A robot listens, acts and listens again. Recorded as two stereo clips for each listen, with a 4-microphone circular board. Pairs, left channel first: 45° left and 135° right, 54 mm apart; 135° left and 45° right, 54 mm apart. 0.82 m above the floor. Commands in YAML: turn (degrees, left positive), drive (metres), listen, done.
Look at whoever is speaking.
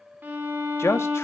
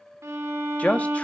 turn: 75
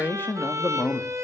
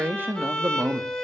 done: "Found it: a man speaking, straight ahead, 1 to 2 m away."